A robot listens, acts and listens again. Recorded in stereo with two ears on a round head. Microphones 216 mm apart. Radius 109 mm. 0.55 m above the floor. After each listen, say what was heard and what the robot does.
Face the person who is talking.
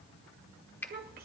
The child speaking: about 40° right or 140° right. Turn 40° right.
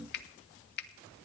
Keep listening.
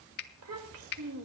So it is at 90° right. Turn 90° right.
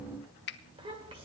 The child speaking is now 25° right. Turn 25° right.
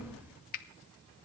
Keep listening.
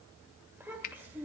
The child speaking is now 10° right. Turn 10° right.
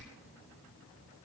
Keep listening.
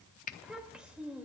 Facing the child speaking.